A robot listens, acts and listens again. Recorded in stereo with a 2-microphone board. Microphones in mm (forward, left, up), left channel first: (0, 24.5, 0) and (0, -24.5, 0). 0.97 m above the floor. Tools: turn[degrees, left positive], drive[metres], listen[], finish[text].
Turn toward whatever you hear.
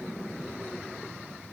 Action: listen[]
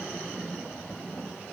Action: listen[]
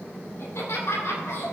Action: turn[90]
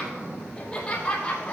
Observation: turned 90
Thought: So it is at 30° left.
Action: turn[30]
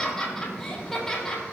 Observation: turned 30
Thought: The laughter is now 10° left.
Action: turn[10]
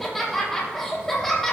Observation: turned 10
Action: finish[Found it: laughter, straight ahead, 2 to 4 m away.]